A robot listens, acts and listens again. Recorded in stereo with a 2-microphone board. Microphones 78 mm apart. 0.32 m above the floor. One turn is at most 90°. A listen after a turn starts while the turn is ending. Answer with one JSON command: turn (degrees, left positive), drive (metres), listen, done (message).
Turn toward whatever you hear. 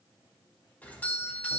{"turn": 20}
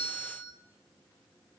{"turn": 90}
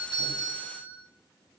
{"turn": 55}
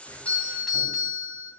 {"done": "Facing the doorbell, 2 to 4 m away."}